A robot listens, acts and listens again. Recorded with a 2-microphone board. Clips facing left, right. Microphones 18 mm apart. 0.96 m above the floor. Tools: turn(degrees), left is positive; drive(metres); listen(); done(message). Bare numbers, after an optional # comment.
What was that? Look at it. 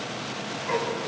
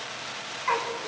turn(-90)
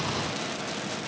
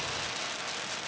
listen()
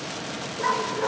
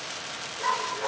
# The dog barking is now 10° left.
turn(10)
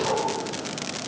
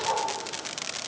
done("Facing the dog barking.")